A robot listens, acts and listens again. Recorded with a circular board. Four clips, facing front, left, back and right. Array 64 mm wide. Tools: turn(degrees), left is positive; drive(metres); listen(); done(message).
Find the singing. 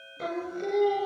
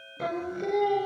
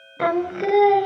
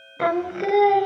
turn(degrees=-145)
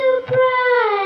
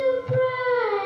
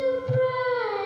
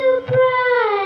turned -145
turn(degrees=-35)
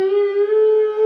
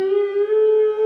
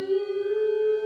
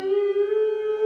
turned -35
turn(degrees=10)
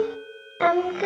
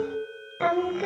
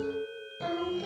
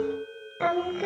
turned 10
done("Facing the singing, under 1 m away.")